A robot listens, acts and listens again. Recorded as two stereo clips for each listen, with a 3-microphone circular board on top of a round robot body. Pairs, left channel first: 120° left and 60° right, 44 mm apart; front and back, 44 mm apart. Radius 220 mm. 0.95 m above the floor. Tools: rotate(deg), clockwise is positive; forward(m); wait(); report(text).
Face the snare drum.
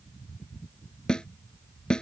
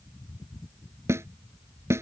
rotate(170)
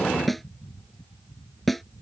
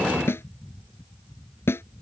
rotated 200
rotate(-30)
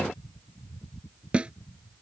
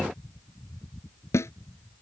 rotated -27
report("Found it: a snare drum, straight ahead.")